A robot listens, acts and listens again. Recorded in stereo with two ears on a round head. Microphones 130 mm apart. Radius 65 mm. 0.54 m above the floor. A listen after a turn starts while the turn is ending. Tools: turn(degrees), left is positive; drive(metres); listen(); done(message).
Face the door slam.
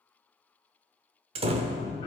turn(degrees=-40)
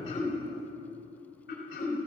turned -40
listen()
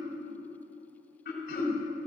done("I heard a door slam, but can't make it out now. It was about straight ahead or 100° right.")